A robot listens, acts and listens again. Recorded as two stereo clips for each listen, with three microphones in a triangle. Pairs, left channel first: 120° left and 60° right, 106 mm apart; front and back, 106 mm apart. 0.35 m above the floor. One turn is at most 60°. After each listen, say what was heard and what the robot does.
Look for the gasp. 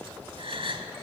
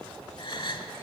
The gasp: 35° right. Turn 35° right.
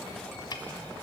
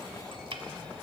I heard a gasp from this way, but can't make it out now.